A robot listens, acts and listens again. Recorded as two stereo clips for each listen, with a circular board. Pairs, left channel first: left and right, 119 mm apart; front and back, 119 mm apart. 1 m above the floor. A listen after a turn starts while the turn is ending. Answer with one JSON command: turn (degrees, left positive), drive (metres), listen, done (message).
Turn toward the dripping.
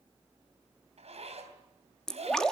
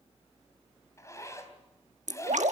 {"turn": 175}
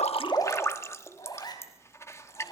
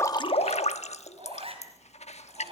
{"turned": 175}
{"turn": 25}
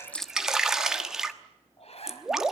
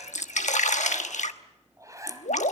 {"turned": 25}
{"done": "Facing the dripping, 1 to 2 m away."}